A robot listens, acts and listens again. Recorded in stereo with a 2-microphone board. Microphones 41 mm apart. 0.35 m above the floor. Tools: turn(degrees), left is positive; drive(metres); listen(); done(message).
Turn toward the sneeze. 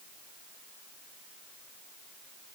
listen()
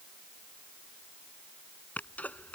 turn(degrees=40)
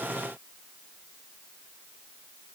listen()
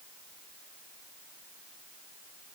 done("I heard a sneeze, but can't make it out now. It was about straight ahead or 100° left.")